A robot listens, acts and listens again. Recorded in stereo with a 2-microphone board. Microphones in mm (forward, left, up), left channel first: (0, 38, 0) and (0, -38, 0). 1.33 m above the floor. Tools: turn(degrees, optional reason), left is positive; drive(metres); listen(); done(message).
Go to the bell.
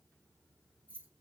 listen()
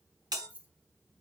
turn(degrees=-75, reason="The bell: about 75° right or 105° right.")
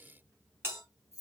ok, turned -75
turn(degrees=-30, reason="So it is at 30° right.")
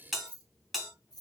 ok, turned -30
drive(metres=1.0)
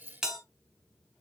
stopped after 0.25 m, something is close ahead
done("Blocked. The bell is further on, straight ahead.")